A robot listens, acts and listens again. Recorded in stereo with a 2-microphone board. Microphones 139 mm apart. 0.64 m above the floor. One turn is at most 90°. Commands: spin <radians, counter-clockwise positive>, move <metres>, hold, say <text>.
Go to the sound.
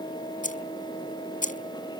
spin 1.22
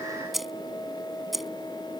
move 1.0
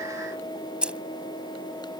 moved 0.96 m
spin -0.17
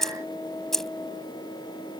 move 1.0
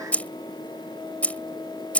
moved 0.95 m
spin 0.17
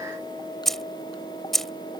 move 1.0
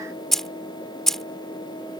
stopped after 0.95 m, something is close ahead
say Arrived at the keys jangling, straight ahead.